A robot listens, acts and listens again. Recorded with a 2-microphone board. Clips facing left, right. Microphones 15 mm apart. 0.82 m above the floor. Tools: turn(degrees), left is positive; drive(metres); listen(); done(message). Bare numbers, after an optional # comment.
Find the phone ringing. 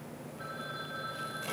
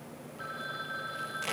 # The phone ringing: about 40° right or 140° right.
turn(-40)
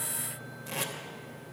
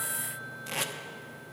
listen()
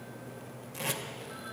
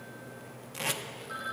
# So it is at 95° right.
turn(-95)
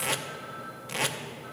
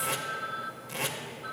# The phone ringing is now 35° right.
turn(-35)
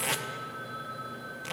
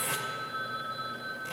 # The phone ringing is now 10° right.
turn(-10)
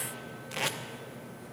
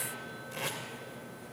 listen()
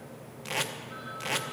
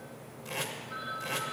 done("Found it: a phone ringing, straight ahead.")